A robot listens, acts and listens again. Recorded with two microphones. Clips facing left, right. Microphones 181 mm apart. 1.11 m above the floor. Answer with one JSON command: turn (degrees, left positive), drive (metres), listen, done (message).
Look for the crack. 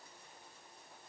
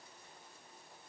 {"listen": true}
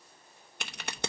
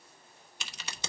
{"turn": 55}
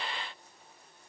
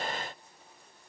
{"listen": true}
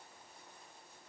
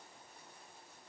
{"done": "I heard a crack, but can't make it out now. It was about straight ahead or 70° left."}